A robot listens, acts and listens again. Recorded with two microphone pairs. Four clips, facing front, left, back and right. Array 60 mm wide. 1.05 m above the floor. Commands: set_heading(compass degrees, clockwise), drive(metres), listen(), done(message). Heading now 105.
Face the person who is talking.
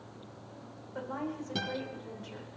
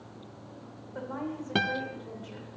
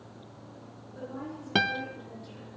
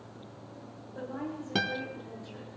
set_heading(60)
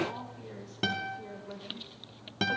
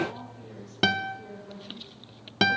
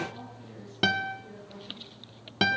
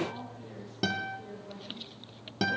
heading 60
set_heading(50)
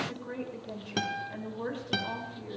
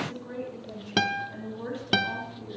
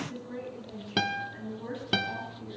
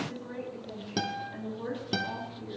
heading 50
done("Found it: a woman speaking, straight ahead.")